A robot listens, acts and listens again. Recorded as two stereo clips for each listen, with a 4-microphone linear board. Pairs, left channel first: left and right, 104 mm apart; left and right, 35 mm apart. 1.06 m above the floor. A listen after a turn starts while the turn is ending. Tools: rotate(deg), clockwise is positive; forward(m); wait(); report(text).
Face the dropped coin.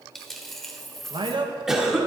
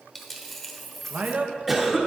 rotate(-30)
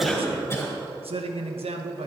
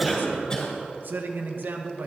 wait()
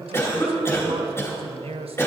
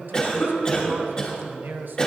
report("I heard a dropped coin, but can't make it out now. It was about 25° right or 145° left.")